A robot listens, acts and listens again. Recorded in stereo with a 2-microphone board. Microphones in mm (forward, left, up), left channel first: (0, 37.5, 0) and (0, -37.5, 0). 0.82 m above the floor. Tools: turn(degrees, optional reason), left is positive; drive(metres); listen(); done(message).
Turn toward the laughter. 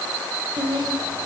turn(degrees=-75, reason="The laughter: about 75° right or 105° right.")
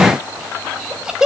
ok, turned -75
turn(degrees=-10, reason="So it is at 10° right.")
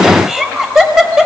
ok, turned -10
turn(degrees=-10, reason="The laughter is now 10° right.")
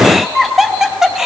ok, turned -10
done("Found it: laughter, straight ahead, 2 to 4 m away.")